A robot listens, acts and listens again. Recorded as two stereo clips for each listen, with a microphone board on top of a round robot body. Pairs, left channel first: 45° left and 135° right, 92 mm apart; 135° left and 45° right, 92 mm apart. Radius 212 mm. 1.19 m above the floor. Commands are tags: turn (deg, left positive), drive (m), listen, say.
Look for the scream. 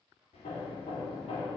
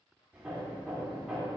<listen/>
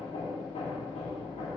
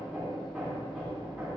<listen/>
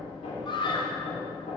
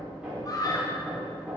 <turn deg="85"/>
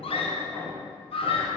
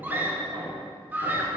<turn deg="25"/>
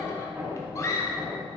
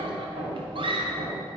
<turn deg="-15"/>
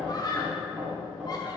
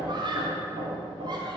<say>Facing the scream.</say>